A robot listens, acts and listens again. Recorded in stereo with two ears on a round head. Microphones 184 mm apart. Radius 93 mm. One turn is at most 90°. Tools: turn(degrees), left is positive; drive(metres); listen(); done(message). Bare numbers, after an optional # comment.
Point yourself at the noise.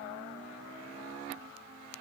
listen()
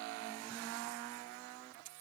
listen()
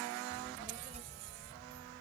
# The child speaking: about 40° right or 140° right.
turn(-40)
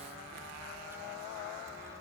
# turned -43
listen()
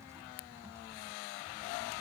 listen()
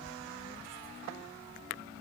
# So it is at 15° right.
turn(-15)
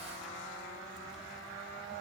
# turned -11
listen()
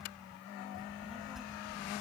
done("Found it: a child speaking, straight ahead.")